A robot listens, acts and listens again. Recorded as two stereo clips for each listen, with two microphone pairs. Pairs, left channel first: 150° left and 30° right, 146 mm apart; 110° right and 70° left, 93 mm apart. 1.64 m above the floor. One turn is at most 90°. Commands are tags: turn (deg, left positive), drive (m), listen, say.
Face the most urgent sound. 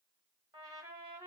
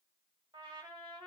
<listen/>
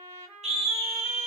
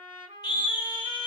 <turn deg="-75"/>
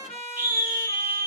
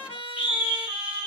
<turn deg="-10"/>
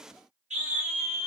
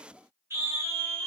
<say>Found it: a scream, straight ahead.</say>